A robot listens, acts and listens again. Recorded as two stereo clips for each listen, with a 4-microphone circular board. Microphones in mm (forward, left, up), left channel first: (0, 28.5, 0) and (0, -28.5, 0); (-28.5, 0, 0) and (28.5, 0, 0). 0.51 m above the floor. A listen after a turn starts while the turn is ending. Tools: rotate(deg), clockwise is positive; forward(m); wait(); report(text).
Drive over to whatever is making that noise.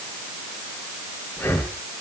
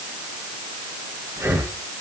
rotate(-35)
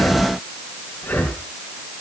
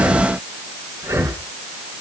rotate(-25)
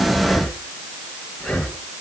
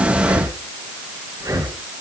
rotate(-10)
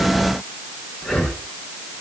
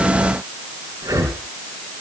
forward(1.0)
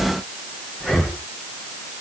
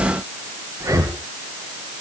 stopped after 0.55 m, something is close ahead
report("Blocked. The breathing is further on, straight ahead.")